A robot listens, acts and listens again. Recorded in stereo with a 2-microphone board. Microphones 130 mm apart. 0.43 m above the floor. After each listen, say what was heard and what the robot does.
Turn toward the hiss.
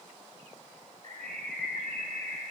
Keep listening.
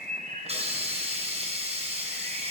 The hiss: about 55° right or 125° right. Turn 55° right.
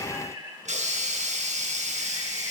So it is at 70° right. Turn 70° right.
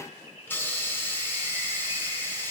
The hiss is now 15° left. Turn 15° left.
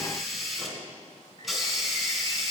Found it: a hiss, straight ahead, 2 to 4 m away.